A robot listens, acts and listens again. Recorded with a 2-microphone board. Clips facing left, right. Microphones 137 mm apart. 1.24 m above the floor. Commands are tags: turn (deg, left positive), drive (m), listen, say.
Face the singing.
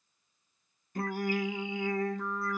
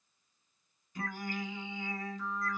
<turn deg="55"/>
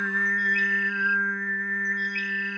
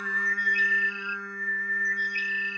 <turn deg="65"/>
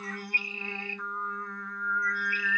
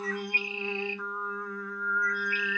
<say>Facing the singing, under 1 m away.</say>